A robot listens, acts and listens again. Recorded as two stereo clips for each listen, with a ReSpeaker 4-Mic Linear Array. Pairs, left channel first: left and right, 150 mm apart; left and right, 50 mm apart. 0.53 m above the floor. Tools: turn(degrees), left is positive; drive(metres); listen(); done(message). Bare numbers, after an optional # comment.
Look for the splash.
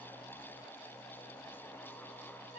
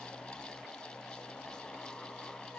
listen()
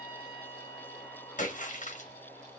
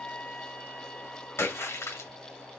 # The splash: about 55° left or 125° left.
turn(55)
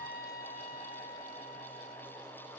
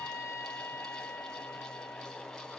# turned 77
listen()
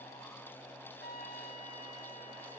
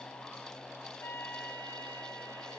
done("I heard a splash, but can't make it out now. It was about 20° right or 45° left.")